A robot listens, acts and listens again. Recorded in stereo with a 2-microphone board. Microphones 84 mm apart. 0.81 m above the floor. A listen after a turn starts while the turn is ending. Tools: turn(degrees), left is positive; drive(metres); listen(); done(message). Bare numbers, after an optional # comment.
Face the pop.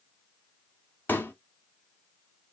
# The pop: about 25° left or 155° left.
turn(25)
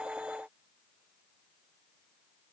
listen()
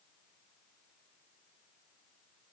done("I heard a pop, but can't make it out now. It was about straight ahead or 130° left.")